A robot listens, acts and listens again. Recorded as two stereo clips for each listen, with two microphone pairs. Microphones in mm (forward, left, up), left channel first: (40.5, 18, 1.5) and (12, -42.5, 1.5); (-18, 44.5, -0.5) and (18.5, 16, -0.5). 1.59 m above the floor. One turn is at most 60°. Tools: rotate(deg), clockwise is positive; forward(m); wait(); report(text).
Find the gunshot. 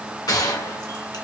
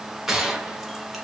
rotate(-45)
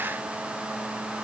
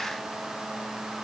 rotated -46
report("I heard a gunshot from this way, but can't make it out now.")